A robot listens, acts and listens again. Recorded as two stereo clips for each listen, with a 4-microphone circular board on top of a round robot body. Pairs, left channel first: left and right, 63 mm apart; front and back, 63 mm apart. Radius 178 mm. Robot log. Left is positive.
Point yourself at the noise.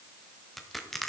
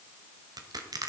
note: The crushing: straight behind.
cmd yaw +180
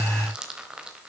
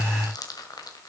note: The crushing is now 15° right.
cmd yaw -15
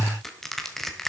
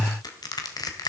end: Found it: crushing, straight ahead, 1 to 2 m away.